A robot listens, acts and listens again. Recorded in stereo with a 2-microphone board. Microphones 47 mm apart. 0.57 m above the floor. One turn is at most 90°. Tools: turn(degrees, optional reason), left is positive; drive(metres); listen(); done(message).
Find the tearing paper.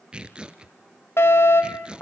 turn(degrees=-25, reason="The tearing paper: about 25° right or 155° right.")
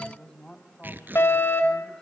turn(degrees=-90, reason="So it is at 130° right.")
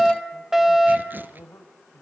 turn(degrees=-40, reason="Nothing new. It was at 40° right.")
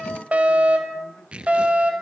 turn(degrees=-25, reason="The tearing paper is now 25° right.")
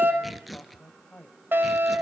done("Facing the tearing paper.")